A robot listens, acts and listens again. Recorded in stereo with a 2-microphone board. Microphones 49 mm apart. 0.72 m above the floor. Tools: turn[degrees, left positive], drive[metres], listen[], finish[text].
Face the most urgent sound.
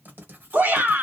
Thought: The shout: about 45° right or 135° right.
Action: turn[-45]
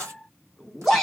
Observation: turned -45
Action: finish[Facing the shout.]